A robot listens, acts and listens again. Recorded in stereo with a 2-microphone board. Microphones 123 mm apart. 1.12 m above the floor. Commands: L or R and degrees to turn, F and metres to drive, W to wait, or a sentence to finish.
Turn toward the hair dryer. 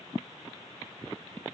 W
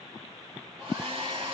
R45
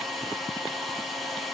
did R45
Facing the hair dryer.